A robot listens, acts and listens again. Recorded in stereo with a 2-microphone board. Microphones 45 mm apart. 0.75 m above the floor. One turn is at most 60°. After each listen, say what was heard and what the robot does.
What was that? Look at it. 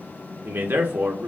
The man speaking: about 60° right or 120° right. Turn 60° right.
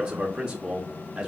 So it is at 30° right. Turn 30° right.
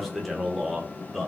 Found it: a man speaking, straight ahead, under 1 m away.